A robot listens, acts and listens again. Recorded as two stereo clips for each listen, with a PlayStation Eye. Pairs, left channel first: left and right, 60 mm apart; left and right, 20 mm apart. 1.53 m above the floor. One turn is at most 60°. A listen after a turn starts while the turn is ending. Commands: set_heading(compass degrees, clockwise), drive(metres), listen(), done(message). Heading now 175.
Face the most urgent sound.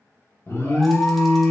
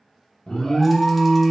set_heading(130)
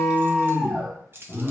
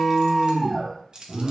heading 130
done("Facing the alarm.")